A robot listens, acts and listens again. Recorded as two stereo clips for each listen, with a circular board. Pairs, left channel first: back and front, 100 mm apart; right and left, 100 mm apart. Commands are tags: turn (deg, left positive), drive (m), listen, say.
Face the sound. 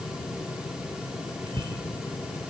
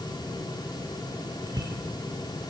<turn deg="40"/>
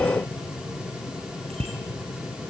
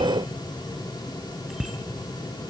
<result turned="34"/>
<say>Facing the bicycle bell.</say>